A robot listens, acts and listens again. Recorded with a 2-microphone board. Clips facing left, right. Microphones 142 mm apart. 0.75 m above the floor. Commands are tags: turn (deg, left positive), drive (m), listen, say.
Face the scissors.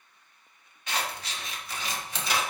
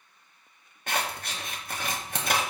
<turn deg="-55"/>
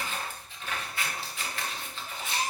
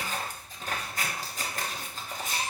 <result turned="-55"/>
<turn deg="-55"/>
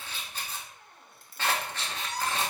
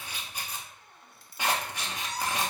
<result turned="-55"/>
<turn deg="-15"/>
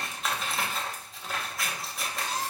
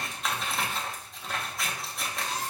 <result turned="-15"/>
<say>Facing the scissors.</say>